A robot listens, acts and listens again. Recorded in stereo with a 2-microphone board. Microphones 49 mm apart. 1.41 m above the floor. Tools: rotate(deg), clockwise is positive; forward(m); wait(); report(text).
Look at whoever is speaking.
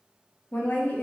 rotate(-35)
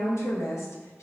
rotate(-105)
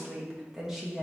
rotate(10)
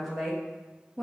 report("Facing the woman speaking, 1 to 2 m away.")